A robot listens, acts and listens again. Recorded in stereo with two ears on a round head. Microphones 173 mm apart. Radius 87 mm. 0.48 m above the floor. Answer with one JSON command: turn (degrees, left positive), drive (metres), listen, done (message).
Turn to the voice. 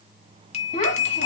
{"turn": 40}
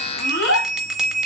{"turn": 100}
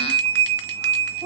{"listen": true}
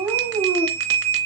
{"turn": -10}
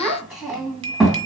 {"done": "Found it: a child speaking, straight ahead, 2 to 4 m away."}